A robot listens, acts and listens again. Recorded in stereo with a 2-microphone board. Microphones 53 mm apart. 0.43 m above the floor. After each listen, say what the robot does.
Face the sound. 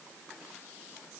Keep listening.
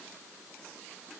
Keep listening.
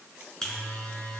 Turn 30° left.
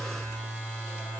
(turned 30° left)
Turn 135° left.
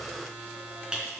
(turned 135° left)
Turn 20° right.
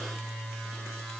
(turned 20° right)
Found it: a buzzer, straight ahead.